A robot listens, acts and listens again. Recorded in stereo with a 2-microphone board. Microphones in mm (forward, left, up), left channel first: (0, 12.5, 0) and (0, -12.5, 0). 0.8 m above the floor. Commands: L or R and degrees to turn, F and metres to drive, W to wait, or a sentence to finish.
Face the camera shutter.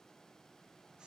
W
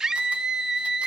W
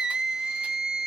I can't make out a camera shutter, only a scream.